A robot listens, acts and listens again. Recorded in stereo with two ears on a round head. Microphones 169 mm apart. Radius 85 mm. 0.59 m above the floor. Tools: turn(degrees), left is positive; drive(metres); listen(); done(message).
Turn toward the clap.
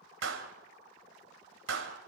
turn(degrees=-75)
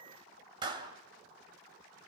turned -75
turn(degrees=-25)
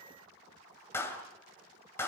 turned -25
turn(degrees=15)
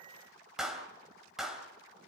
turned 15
done("Found it: a clap, straight ahead, 2 to 4 m away.")